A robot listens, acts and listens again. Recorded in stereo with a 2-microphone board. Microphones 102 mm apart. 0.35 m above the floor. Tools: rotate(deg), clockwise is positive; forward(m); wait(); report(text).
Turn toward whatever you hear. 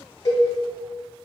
rotate(-30)
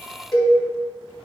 report("Found it: a cowbell, straight ahead.")